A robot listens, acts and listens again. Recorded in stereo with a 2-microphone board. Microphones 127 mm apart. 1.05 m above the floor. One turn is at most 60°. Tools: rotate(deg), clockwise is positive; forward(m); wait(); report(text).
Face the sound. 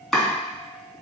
rotate(-30)
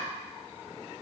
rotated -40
wait()
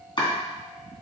rotate(-60)
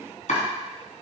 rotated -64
rotate(-60)
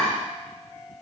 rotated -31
rotate(-45)
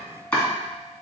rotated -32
rotate(-10)
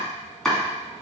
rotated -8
report("Facing the chopping, 2 to 4 m away.")